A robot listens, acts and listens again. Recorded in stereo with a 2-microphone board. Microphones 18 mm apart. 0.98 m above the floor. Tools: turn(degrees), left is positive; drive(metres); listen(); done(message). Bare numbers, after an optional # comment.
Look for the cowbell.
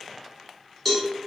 turn(30)
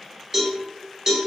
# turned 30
# So it is at 25° right.
turn(-25)
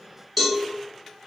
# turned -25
done("Facing the cowbell.")